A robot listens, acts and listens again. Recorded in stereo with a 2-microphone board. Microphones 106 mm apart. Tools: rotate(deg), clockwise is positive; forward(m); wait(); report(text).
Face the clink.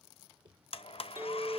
rotate(25)
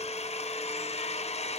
wait()
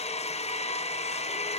wait()
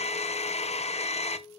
report("Facing the clink, 2 to 4 m away.")